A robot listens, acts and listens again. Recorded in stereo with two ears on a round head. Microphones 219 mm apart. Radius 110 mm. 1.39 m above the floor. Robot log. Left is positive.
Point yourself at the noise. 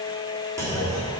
cmd yaw -30
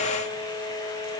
cmd idle
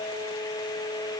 end: I heard a clunk, but can't make it out now. It was about 20° left or 140° right.